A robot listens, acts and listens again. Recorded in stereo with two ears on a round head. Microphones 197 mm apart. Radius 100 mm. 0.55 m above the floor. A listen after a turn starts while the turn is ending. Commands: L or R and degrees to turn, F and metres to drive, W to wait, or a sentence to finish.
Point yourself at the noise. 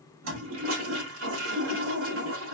R60
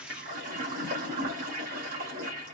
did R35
R40
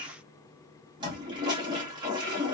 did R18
R20
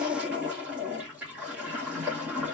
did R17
Facing the toilet flushing.